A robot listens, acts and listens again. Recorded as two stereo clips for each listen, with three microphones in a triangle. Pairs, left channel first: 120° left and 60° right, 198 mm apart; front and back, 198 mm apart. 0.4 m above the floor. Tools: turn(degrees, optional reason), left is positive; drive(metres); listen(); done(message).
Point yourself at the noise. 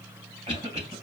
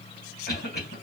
done("Facing the cough, 2 to 4 m away.")